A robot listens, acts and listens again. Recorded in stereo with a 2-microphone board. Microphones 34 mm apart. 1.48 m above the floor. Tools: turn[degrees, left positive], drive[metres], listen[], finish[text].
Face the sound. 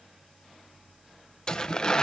Thought: The tearing paper: about 20° left or 160° left.
Action: turn[20]
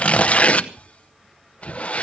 Thought: So it is at 135° left.
Action: turn[135]
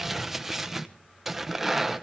Thought: The tearing paper is now 10° right.
Action: turn[-10]
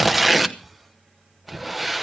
Action: finish[Facing the tearing paper, under 1 m away.]